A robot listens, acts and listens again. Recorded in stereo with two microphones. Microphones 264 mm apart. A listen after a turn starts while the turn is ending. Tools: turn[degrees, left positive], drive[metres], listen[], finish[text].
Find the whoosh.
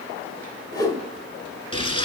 Action: turn[30]
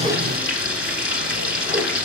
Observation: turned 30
Action: listen[]
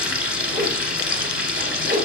Thought: So it is at 15° right.
Action: turn[-15]
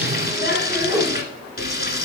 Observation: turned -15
Action: finish[Facing the whoosh, 1 to 2 m away.]